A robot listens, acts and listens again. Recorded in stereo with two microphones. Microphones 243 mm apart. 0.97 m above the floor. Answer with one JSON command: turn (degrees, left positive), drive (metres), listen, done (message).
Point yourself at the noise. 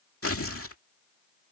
{"turn": 70}
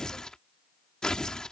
{"done": "Facing the tearing paper."}